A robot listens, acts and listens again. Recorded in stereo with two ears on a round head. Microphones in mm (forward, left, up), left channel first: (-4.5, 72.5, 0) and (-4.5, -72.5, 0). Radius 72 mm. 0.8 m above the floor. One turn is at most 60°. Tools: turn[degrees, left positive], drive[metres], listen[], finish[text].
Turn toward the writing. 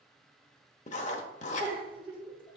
Thought: The writing: about 45° left or 135° left.
Action: turn[45]
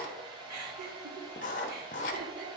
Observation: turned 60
Thought: So it is at 65° left.
Action: turn[60]
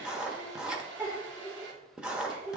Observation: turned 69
Action: finish[Found it: writing, straight ahead, under 1 m away.]